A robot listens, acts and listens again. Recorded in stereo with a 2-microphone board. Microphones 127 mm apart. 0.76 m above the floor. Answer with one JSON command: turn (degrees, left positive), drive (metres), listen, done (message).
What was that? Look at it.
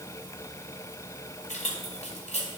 {"turn": 55}
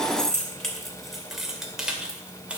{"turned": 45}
{"turn": -10}
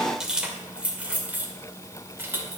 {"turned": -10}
{"turn": -15}
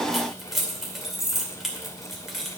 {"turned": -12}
{"done": "Facing the keys jangling, 2 to 4 m away."}